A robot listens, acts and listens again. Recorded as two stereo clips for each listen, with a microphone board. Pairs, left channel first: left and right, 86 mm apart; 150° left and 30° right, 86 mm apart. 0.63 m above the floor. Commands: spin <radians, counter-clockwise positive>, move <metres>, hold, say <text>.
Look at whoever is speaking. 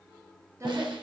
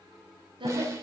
spin -0.61
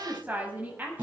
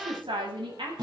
spin -0.35
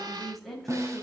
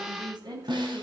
say Found it: a woman speaking, straight ahead, 2 to 4 m away.